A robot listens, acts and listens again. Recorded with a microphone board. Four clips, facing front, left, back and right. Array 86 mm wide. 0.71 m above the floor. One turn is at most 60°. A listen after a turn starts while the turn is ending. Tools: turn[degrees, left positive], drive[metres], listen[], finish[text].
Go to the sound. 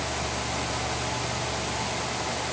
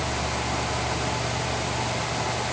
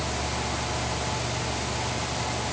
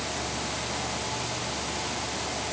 Action: listen[]
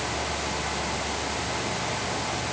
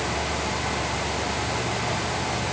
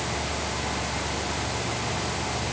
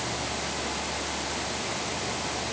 Action: listen[]
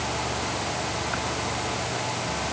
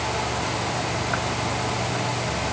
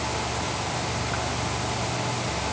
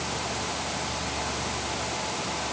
Action: finish[I can't make out anything.]